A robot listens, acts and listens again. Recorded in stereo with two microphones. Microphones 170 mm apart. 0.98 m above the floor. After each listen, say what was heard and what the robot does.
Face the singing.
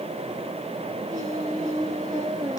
The singing: about 20° right or 160° right. Turn 20° right.
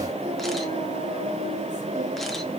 So it is at 135° right. Turn 135° right.
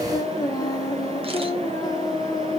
The singing is now 20° left. Turn 20° left.
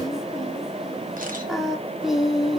Found it: singing, straight ahead.